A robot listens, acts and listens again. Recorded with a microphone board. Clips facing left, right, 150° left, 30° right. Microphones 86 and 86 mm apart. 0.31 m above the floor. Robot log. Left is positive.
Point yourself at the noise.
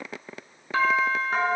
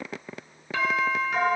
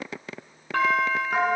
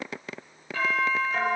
note: The doorbell: 140° left.
cmd yaw +140
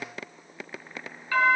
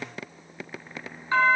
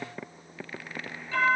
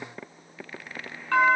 note: The doorbell is now 25° right.
cmd yaw -25
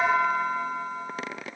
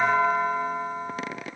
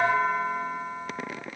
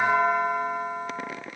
note: The doorbell is now 30° right.
cmd yaw -30
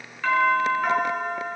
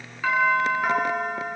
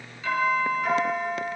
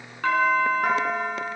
end: Found it: a doorbell, straight ahead, 2 to 4 m away.